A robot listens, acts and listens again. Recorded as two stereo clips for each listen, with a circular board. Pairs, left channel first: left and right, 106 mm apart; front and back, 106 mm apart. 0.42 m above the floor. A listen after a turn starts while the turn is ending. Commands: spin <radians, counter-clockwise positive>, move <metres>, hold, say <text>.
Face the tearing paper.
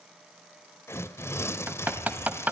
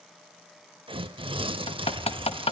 spin 2.71
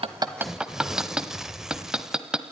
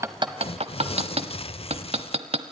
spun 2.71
say Facing the tearing paper, under 1 m away.